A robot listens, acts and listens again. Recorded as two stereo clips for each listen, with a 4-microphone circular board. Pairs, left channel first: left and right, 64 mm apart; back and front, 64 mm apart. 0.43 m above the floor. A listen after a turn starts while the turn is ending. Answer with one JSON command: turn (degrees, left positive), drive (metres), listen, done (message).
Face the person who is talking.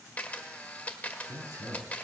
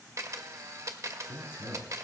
{"turn": -125}
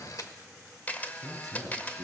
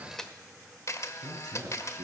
{"done": "Found it: a man speaking, straight ahead, over 4 m away."}